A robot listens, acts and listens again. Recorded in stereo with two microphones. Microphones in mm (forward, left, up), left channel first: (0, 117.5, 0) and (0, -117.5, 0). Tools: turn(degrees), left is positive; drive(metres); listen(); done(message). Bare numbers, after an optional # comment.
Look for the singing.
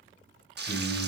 turn(30)
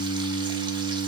# So it is at 150° left.
turn(150)
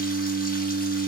# The singing is now 10° right.
turn(-10)
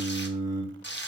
done("Facing the singing, 2 to 4 m away.")